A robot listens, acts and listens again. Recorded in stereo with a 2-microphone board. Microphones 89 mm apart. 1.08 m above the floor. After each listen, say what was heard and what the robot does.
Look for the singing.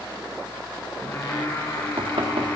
The singing: about 25° left or 155° left. Turn 25° left.
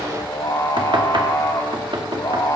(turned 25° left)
So it is at 130° left. Turn 130° left.
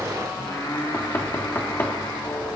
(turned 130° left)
The singing is now 45° left. Turn 45° left.
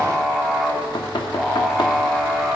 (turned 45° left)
Found it: singing, straight ahead, 2 to 4 m away.